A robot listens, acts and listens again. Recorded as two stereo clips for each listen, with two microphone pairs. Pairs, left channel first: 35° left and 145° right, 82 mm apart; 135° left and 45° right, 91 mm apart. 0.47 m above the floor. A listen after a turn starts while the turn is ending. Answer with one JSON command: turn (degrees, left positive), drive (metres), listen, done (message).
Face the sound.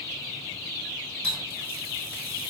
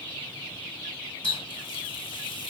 {"turn": 105}
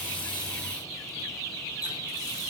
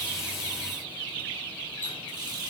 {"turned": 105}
{"done": "Facing the running tap."}